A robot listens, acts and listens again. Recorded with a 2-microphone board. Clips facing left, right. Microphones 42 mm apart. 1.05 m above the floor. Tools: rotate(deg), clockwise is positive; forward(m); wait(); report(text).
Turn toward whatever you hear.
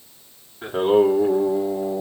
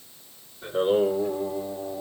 rotate(-90)
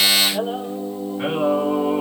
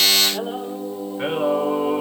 rotate(15)
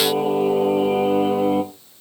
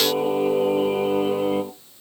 rotate(10)
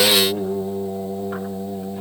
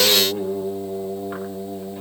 report("Facing the singing.")